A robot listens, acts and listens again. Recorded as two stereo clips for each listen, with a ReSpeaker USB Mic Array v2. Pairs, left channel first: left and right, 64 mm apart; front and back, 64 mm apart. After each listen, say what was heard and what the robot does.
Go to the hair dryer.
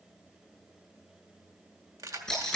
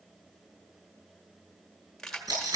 Keep listening.
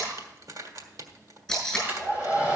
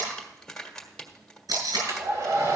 The hair dryer: 155° right. Turn 155° right.
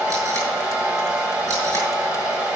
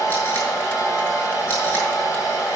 The hair dryer is now 20° right. Turn 20° right.
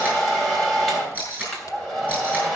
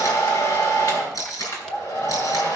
Drive 1.0 m forward.
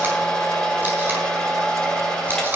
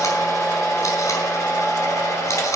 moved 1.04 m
The hair dryer is now 10° left. Turn 10° left.
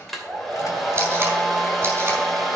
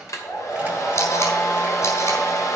Drive 1.0 m forward.
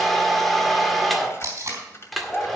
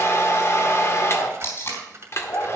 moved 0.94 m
Drive 1.0 m forward.
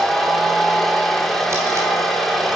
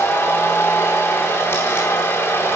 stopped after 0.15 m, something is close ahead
Arrived at the hair dryer, straight ahead.